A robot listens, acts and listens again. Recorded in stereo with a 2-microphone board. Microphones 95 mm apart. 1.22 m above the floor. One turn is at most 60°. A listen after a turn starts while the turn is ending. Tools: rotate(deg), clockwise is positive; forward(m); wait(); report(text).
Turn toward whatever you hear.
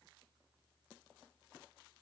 wait()
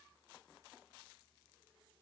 wait()
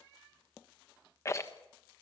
rotate(-30)
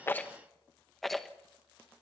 report("Facing the rattle, 1 to 2 m away.")